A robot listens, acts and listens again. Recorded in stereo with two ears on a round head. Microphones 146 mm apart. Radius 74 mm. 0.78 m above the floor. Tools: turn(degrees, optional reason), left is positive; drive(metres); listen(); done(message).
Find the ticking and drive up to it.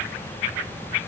listen()
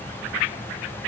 listen()
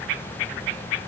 done("I can't make out ticking to turn to.")